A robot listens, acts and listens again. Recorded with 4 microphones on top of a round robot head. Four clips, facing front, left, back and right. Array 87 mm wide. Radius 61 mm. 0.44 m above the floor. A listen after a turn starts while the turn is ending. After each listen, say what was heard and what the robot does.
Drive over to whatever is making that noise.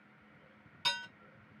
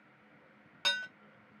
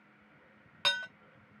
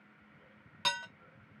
The dishes clattering: 160° left. Turn 160° left.
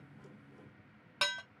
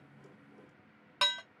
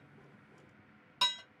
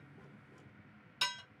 The dishes clattering is now 45° left. Turn 45° left.
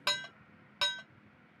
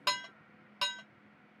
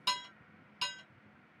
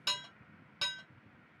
The dishes clattering is now 10° left. Turn 10° left.
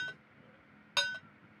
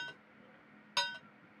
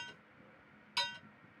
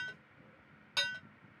Drive 1.0 m forward.
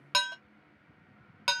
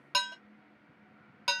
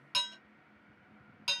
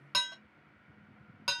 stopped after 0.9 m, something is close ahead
I am next to the dishes clattering.